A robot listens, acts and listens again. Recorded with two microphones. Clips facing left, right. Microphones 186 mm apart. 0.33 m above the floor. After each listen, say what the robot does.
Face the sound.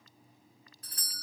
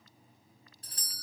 Turn 30° right.
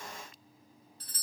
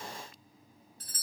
Turn 115° right.
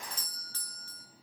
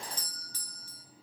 Turn 20° right.
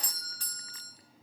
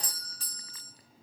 Facing the doorbell, 2 to 4 m away.